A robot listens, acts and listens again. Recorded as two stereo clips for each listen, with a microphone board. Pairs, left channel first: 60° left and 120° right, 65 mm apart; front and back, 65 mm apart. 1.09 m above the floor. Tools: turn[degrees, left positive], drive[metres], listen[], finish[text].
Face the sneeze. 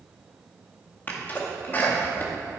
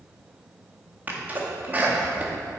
Thought: The sneeze: 120° left.
Action: turn[120]
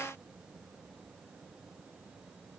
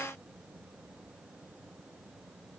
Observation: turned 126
Thought: Nothing new. It was at 10° right.
Action: turn[-10]
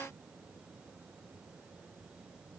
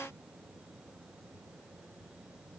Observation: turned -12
Action: finish[Facing where the sneeze came from. I can't hear it now.]